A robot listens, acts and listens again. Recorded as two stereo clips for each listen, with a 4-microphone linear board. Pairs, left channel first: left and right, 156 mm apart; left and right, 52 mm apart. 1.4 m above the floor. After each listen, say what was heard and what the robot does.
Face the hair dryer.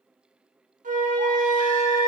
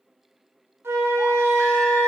Keep listening.
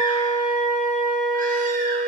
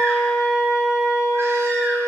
Keep listening.
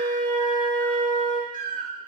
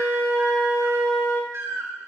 I can't make out a hair dryer to turn to.